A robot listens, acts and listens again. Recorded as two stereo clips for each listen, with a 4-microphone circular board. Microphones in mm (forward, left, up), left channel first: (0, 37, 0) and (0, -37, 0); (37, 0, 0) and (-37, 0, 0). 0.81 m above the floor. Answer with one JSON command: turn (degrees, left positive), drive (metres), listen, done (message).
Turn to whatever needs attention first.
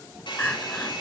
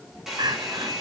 {"turn": 160}
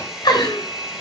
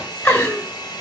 {"turn": 60}
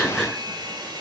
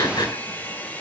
{"listen": true}
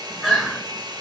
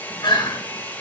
{"done": "Found it: crying, straight ahead."}